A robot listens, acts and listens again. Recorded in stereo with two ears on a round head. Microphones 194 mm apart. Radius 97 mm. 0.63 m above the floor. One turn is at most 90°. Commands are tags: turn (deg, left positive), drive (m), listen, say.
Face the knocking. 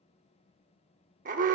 <listen/>
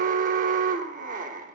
<listen/>
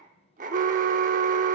<say>I can't make out knocking to turn to.</say>